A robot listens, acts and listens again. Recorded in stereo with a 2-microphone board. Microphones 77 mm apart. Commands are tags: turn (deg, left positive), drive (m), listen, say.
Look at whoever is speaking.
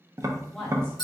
<turn deg="30"/>
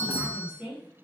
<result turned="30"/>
<turn deg="-20"/>
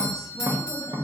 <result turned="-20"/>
<listen/>
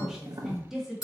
<say>Facing the woman speaking, 1 to 2 m away.</say>